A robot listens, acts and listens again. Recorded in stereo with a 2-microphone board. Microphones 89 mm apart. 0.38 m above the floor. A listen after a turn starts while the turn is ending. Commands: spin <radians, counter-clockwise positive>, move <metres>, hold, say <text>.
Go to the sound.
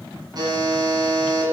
spin -0.87
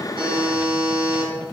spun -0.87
spin -1.40
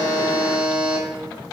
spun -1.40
spin -0.26
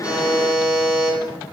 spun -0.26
move 1.0
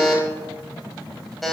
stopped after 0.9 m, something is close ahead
say I am next to the buzzer.